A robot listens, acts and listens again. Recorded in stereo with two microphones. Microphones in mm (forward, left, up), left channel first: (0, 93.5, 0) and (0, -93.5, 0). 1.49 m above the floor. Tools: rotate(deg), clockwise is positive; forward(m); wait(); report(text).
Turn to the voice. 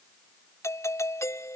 wait()
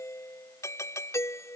wait()
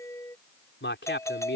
rotate(-90)
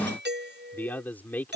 rotate(-10)
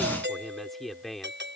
report("Found it: a man speaking, straight ahead.")